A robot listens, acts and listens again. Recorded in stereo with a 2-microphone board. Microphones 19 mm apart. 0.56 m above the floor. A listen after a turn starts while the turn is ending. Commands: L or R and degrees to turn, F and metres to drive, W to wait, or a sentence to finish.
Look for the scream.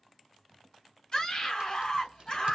L40
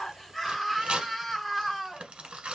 L10
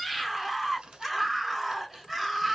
Facing the scream, 1 to 2 m away.